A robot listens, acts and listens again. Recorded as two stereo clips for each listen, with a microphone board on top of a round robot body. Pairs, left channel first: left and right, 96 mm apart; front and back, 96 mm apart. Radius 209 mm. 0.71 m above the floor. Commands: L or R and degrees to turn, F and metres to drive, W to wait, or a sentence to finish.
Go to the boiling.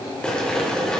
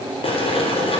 L10
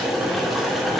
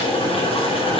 F1.0
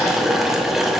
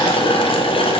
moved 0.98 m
F1.0
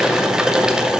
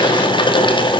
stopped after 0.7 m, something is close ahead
R10
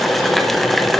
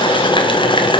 I am next to the boiling.